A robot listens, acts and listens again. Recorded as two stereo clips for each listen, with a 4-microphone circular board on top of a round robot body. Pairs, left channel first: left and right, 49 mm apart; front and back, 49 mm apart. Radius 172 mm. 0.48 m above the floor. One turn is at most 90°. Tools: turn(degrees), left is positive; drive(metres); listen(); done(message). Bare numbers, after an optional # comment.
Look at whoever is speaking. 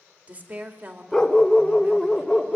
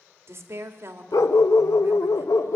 # The woman speaking: 145° right.
turn(-90)
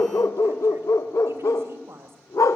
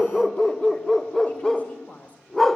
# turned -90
# The woman speaking is now 60° right.
turn(-60)
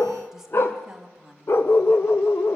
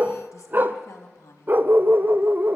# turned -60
# The woman speaking is now 10° right.
turn(-10)
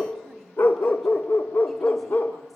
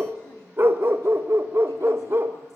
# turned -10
listen()
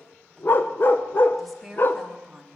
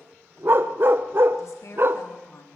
done("Facing the woman speaking, 2 to 4 m away.")